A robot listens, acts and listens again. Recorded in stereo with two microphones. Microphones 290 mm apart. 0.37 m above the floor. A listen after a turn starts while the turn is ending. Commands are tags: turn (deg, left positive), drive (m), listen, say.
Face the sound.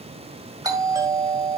<turn deg="-30"/>
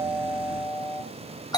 <turn deg="15"/>
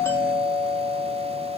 <say>Facing the doorbell.</say>